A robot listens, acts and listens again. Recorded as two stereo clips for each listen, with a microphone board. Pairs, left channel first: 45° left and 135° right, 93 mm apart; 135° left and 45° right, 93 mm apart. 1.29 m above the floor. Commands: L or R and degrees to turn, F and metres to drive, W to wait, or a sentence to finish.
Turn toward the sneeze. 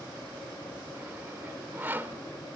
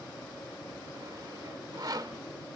W
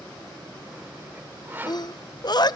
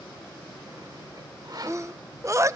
L10
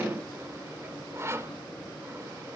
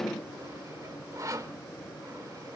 Facing where the sneeze came from. I can't hear it now.